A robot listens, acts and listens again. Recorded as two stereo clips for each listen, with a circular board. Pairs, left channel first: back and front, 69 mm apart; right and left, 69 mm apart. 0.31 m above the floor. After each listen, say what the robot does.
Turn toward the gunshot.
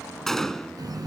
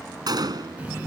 Turn 95° left.
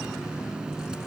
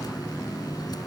I heard a gunshot from this way, but can't make it out now.